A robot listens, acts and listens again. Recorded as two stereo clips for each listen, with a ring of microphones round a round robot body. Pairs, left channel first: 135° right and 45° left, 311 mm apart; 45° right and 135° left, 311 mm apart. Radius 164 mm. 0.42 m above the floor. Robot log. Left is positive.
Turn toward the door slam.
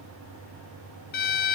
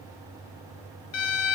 cmd idle
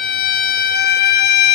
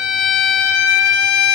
cmd idle
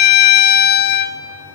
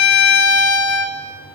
end: I can't make out a door slam, only a violin.